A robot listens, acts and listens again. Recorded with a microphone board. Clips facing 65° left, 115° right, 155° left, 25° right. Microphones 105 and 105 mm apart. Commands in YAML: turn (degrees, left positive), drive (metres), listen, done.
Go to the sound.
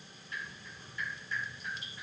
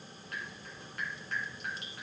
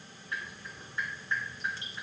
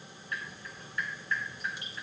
turn: -135
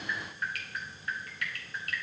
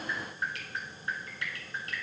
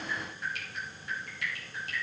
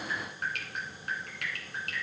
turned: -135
turn: -50
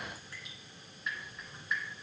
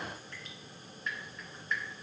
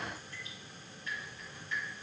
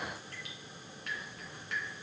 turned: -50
turn: -15
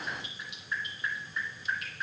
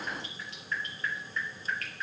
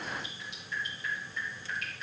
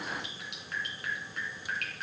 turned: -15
drive: 1.0
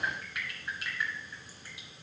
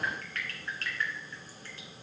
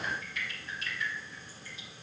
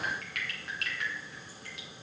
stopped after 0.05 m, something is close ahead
turn: -10
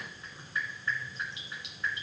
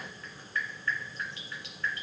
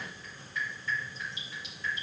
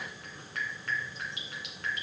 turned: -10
done: "Something is in my way. I am facing the dripping but have not reached it."